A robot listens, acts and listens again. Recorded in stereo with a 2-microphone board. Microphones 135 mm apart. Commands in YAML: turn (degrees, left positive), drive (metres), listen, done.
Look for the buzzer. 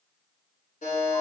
turn: 90
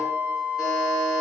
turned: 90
done: "Facing the buzzer, 1 to 2 m away."